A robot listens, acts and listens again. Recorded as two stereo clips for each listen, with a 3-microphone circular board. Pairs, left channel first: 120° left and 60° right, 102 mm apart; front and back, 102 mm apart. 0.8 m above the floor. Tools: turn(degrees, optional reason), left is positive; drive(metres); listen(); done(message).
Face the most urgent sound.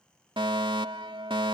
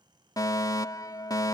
turn(degrees=-45, reason="The fire alarm: 45° right.")
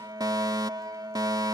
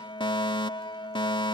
turn(degrees=-20, reason="The fire alarm is now 20° right.")
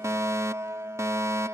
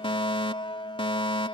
done("Facing the fire alarm.")